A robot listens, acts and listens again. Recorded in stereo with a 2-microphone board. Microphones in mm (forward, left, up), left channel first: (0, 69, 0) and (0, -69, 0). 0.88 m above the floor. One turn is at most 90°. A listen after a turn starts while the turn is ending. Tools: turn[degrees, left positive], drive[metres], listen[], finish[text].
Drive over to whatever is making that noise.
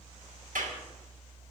Action: turn[-90]
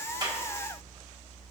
Action: listen[]
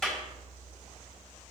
Action: drive[1.0]
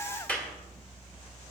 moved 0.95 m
Thought: The clap is now 10° left.
Action: turn[10]
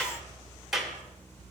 Action: drive[1.0]
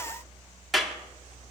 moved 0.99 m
Action: drive[1.0]
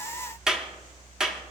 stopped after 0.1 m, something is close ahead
Action: finish[Arrived at the clap, straight ahead.]